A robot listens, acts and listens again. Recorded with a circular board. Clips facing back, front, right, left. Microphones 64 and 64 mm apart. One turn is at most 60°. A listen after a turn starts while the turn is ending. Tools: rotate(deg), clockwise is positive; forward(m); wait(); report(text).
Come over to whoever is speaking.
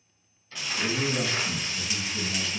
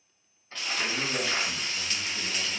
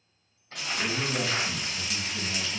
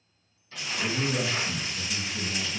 rotate(60)
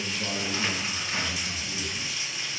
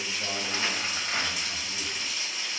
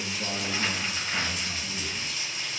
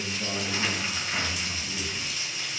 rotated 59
rotate(60)
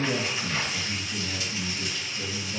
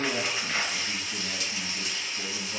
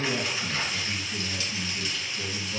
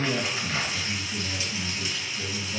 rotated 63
rotate(20)
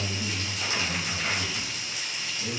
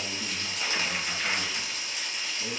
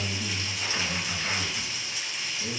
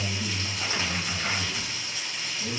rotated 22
forward(1.0)
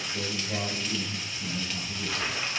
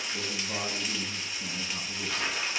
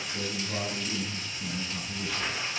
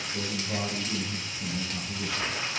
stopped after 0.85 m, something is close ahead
rotate(10)
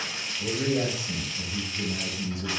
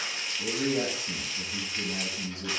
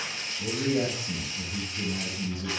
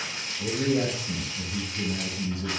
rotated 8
report("Arrived at the man speaking, straight ahead.")